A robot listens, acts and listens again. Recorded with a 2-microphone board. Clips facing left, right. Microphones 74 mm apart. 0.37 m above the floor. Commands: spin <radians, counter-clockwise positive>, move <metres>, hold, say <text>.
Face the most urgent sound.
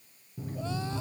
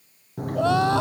spin -1.57
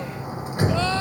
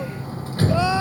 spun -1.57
spin -0.17
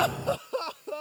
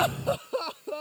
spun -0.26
say Facing the crying.